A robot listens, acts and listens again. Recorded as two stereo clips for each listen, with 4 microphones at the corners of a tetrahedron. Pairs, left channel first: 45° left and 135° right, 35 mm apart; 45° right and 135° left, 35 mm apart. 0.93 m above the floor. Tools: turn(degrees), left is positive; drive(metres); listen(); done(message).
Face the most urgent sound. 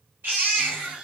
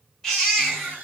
turn(degrees=-120)
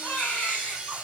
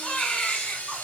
done("Facing the baby crying.")